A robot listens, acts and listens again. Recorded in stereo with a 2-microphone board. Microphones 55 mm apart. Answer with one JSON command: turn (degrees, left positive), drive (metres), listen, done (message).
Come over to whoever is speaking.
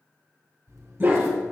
{"listen": true}
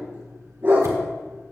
{"listen": true}
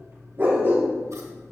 {"done": "I can't make out anyone speaking, only a dog barking and scissors."}